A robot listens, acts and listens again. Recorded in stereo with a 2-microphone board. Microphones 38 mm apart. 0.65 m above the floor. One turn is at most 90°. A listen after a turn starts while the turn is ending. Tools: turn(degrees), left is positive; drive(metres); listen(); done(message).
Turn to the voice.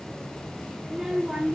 turn(degrees=-20)
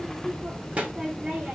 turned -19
turn(degrees=-90)
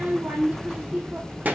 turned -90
turn(degrees=-50)
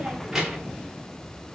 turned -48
listen()
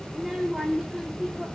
done("Found it: a child speaking, straight ahead.")